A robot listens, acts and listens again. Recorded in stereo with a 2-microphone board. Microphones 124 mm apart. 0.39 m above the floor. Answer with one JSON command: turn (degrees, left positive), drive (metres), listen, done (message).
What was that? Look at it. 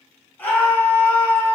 {"turn": 15}
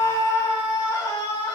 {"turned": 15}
{"turn": 150}
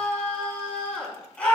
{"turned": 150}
{"turn": 10}
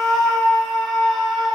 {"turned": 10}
{"done": "Found it: a scream, straight ahead."}